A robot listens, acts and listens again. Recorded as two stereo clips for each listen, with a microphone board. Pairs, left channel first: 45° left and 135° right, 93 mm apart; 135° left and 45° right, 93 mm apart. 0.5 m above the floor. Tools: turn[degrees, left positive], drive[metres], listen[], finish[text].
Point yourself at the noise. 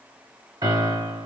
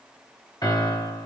Thought: The piano: straight behind.
Action: turn[180]
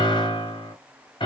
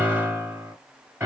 Thought: The piano is now 20° left.
Action: turn[20]
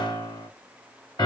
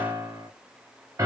Action: finish[Found it: a piano, straight ahead.]